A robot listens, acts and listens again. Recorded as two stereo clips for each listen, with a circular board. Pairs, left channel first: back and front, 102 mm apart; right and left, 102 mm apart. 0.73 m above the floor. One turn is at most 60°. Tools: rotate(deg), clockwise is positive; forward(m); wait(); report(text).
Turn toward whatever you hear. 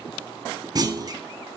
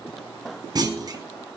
rotate(-45)
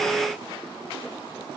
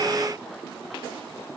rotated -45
report("Facing where the clunk came from. I can't hear it now.")